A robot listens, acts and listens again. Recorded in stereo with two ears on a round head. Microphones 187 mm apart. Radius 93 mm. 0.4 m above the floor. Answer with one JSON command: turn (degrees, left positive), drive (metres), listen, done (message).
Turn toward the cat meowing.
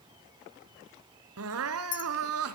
{"listen": true}
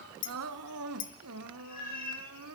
{"turn": 45}
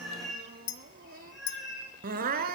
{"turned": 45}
{"done": "Found it: a cat meowing, straight ahead."}